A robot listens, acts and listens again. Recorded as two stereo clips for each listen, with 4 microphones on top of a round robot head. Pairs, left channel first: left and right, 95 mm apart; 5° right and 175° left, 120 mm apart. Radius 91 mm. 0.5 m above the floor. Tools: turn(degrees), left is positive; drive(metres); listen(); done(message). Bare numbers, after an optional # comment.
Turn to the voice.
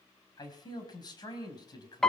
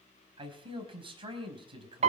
# The man speaking: 130° left.
turn(130)
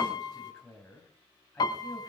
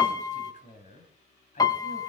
# The man speaking is now 10° left.
turn(10)
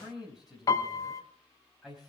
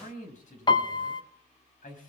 done("Facing the man speaking.")